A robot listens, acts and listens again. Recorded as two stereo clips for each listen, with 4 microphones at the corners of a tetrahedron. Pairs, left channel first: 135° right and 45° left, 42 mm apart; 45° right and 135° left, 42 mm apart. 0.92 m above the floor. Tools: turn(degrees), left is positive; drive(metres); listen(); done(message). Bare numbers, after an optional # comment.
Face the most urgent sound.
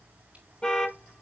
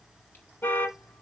# The alarm: 70° right.
turn(-70)
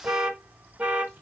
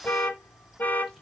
# The alarm is now 10° right.
turn(-10)
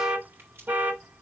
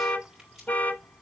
done("Facing the alarm, 1 to 2 m away.")